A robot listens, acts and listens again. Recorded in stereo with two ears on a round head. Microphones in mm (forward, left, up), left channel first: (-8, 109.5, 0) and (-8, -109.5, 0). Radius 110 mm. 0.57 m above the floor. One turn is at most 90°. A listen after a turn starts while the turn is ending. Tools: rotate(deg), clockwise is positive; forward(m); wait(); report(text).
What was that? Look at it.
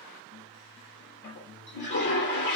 rotate(-50)
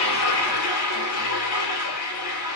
rotate(-80)
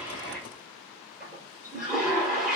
report("Facing the toilet flushing, 2 to 4 m away.")